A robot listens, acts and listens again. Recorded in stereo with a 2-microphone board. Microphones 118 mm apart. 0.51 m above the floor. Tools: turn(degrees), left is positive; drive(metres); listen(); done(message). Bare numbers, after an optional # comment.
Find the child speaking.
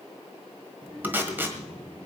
# The child speaking: about 40° right or 140° right.
turn(-40)
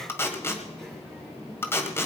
done("Facing the child speaking, over 4 m away.")